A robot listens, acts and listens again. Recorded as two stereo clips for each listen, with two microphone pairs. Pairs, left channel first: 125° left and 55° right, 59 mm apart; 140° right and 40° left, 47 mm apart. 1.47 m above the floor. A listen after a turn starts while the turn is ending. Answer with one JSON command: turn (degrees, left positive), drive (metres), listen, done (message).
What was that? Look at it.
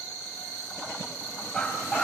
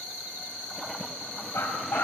{"turn": -160}
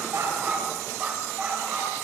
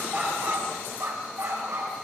{"turn": 10}
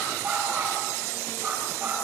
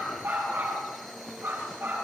{"done": "Facing the dog barking."}